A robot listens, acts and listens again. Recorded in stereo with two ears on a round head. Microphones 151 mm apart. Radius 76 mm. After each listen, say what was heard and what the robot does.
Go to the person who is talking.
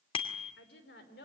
The woman speaking: about 75° left or 105° left. Turn 75° left.
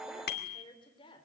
So it is at 30° left. Turn 30° left.
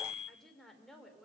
Drive 1.0 m forward.
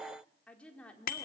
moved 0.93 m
The woman speaking is now 10° left. Turn 10° left.
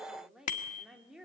Drive 1.0 m forward.
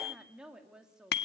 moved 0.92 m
Drive 1.0 m forward.
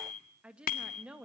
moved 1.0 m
Drive 1.0 m forward.
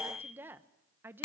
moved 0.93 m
The woman speaking is now 15° right. Turn 15° right.
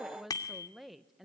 Drive 1.0 m forward.
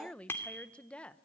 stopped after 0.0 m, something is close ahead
I am next to the woman speaking.